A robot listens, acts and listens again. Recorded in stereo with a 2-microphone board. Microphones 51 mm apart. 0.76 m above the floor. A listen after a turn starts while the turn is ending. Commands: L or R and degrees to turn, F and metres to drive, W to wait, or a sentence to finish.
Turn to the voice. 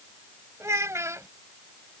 R75
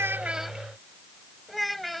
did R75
Facing the child speaking.